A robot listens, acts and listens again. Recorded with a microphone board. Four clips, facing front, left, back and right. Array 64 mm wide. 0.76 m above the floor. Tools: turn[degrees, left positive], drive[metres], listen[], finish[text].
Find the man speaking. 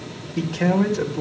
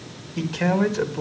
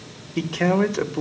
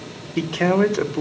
Thought: The man speaking: 130° right.
Action: turn[-130]
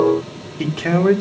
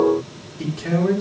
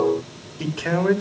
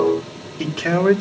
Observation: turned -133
Thought: The man speaking is now 30° right.
Action: turn[-30]
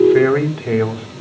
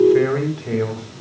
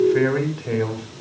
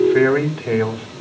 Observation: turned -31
Thought: The man speaking is now 15° right.
Action: turn[-15]
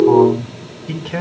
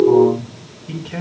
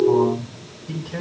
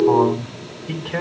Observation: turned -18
Action: finish[Facing the man speaking.]